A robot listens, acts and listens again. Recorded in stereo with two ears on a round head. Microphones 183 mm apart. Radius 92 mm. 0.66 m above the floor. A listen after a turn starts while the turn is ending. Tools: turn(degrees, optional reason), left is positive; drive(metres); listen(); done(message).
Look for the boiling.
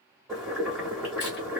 turn(degrees=30)
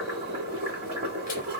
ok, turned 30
turn(degrees=-35, reason="So it is at 35° right.")
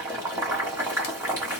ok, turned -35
turn(degrees=-15, reason="The boiling is now 15° right.")
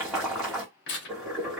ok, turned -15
done("Found it: boiling, straight ahead.")